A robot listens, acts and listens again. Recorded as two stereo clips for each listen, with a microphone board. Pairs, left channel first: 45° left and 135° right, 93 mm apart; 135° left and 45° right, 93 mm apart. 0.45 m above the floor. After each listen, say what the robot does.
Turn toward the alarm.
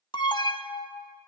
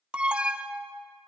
Turn 30° left.
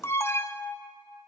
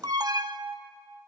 Turn 10° right.
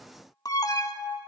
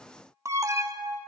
Facing the alarm.